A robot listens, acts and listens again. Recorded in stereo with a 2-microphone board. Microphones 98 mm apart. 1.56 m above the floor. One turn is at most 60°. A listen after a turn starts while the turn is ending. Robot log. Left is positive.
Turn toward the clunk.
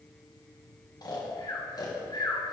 cmd idle
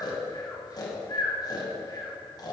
cmd idle
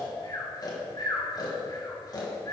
end: I can't make out a clunk to turn to.